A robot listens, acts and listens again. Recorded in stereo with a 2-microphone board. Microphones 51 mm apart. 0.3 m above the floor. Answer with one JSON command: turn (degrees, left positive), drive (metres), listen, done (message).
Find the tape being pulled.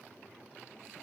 {"listen": true}
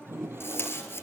{"turn": 50}
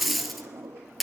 {"done": "Found it: tape being pulled, straight ahead."}